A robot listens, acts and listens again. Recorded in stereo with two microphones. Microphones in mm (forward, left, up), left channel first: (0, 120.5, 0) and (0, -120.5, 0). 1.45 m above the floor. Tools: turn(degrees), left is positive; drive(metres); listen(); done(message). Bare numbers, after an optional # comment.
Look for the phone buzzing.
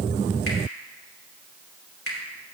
listen()
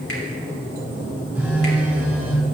turn(-30)
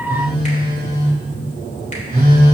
# So it is at 140° right.
turn(-140)
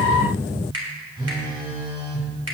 # The phone buzzing is now 20° right.
turn(-20)
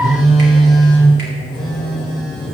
done("Found it: a phone buzzing, straight ahead, 2 to 4 m away.")